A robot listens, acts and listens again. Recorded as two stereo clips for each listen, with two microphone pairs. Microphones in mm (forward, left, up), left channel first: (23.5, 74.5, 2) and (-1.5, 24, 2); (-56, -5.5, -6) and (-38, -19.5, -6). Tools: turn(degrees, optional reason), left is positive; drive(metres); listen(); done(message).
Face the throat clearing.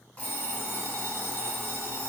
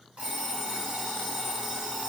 listen()
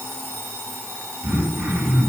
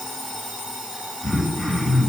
turn(degrees=180, reason="The throat clearing: straight behind.")
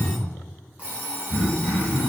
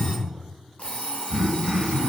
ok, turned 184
done("Found it: throat clearing, straight ahead, 1 to 2 m away.")